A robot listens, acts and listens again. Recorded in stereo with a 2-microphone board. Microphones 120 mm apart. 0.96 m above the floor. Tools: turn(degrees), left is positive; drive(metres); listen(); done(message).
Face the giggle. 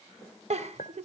turn(degrees=-60)
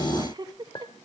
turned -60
turn(degrees=-40)
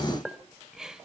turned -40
done("Found it: a giggle, straight ahead, 1 to 2 m away.")